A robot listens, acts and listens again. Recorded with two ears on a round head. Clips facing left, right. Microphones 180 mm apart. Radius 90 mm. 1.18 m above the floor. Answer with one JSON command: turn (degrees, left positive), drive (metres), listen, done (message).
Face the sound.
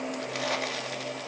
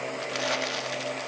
{"turn": -30}
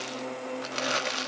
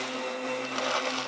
{"turn": 25}
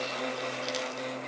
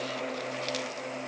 {"listen": true}
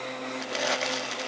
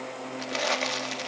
{"done": "Found it: crumpling, straight ahead."}